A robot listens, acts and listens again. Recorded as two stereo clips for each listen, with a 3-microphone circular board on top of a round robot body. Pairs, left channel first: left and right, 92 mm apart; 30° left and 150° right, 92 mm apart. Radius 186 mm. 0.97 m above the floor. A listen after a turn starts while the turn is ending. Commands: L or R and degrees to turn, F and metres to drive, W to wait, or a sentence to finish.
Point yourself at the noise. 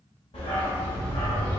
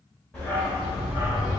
L125
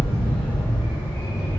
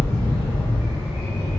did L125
L55
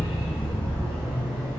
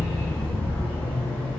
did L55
L15
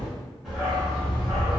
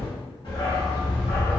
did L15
Facing the dog barking, 2 to 4 m away.